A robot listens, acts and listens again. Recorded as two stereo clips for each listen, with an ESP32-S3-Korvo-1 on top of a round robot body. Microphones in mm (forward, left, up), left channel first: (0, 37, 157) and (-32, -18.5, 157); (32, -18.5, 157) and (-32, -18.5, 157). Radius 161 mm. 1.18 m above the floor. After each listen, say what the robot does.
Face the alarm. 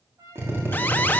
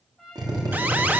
Turn 120° left.
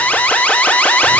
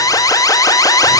Facing the alarm.